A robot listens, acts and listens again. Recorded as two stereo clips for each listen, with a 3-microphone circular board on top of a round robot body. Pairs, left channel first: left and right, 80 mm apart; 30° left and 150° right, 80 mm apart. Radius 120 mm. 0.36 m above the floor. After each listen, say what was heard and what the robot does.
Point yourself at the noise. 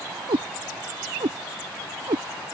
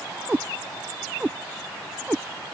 The cat meowing: 75° right. Turn 75° right.
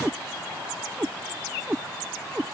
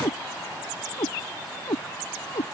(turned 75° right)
The cat meowing is now 15° right. Turn 15° right.
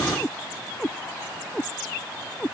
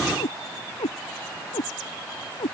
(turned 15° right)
Found it: a cat meowing, straight ahead.